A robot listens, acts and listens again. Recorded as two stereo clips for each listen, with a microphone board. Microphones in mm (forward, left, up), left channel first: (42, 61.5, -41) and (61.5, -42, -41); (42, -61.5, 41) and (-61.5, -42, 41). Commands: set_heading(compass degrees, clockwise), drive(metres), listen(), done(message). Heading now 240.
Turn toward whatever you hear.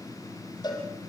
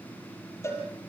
set_heading(190)
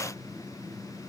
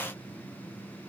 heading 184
listen()
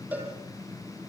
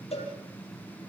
done("Facing the cowbell, over 4 m away.")